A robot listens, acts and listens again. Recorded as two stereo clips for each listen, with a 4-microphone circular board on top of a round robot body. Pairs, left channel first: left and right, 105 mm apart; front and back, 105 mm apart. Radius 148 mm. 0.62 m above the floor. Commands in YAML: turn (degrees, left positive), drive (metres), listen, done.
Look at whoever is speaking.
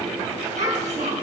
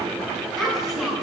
turn: -90
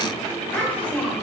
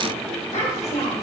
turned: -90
turn: 15
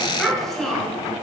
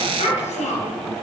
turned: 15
done: "Facing the child speaking, 2 to 4 m away."